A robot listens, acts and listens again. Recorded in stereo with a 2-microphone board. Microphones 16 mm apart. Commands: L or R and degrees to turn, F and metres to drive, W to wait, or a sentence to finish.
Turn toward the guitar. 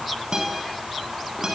R50
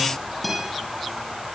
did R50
Facing the guitar.